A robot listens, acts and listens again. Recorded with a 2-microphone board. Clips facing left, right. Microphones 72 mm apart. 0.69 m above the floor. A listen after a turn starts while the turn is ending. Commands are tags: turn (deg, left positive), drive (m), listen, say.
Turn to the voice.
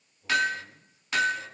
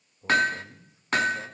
<turn deg="-45"/>
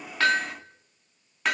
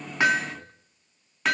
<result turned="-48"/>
<listen/>
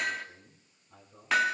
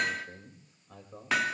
<turn deg="-85"/>
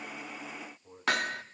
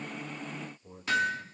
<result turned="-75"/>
<turn deg="-10"/>
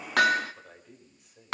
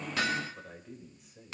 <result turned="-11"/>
<say>Facing the man speaking, 2 to 4 m away.</say>